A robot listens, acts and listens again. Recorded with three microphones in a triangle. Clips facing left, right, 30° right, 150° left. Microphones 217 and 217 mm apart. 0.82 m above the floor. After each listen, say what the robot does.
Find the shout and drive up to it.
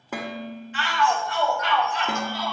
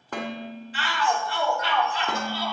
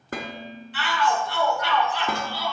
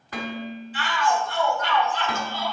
Turn 35° right.
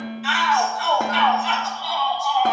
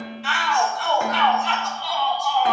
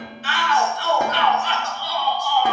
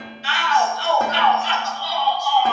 Drive 1.0 m forward.
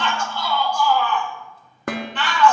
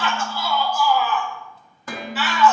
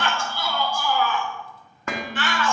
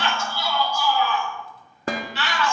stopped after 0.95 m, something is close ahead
I am next to the shout.